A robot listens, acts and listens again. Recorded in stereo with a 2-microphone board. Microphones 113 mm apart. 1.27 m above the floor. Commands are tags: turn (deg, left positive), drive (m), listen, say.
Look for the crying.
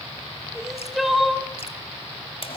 <turn deg="30"/>
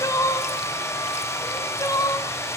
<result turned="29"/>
<turn deg="150"/>
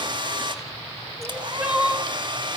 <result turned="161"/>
<turn deg="-10"/>
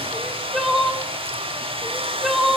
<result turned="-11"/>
<say>Found it: crying, straight ahead.</say>